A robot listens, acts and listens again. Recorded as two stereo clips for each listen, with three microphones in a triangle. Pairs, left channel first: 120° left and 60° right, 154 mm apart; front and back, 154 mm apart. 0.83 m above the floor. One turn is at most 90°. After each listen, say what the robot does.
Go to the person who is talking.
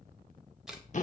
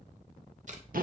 Keep listening.
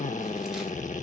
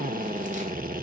Keep listening.
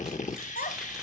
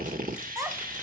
Turn 90° left.
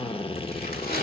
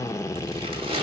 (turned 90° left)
Turn 20° left.
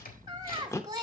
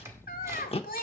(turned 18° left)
Drive 1.0 m forward.
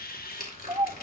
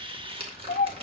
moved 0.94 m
Turn 10° left.
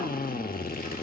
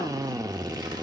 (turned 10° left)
Keep listening.
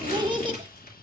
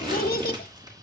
Drive 1.0 m forward.
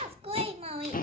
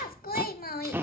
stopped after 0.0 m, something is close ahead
Turn 10° right.
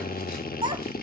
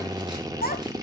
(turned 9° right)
Arrived at the child speaking, straight ahead.